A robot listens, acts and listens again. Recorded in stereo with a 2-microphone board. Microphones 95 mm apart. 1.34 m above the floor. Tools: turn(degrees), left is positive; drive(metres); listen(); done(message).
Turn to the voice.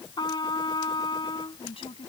turn(degrees=90)
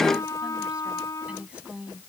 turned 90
turn(degrees=-10)
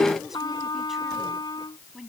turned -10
done("Facing the woman speaking.")